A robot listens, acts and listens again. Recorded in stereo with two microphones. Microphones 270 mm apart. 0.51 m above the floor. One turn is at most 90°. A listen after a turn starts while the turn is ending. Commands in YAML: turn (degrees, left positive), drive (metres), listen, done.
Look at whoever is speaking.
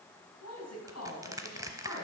turn: 75
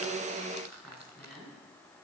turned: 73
done: "Facing the woman speaking, 2 to 4 m away."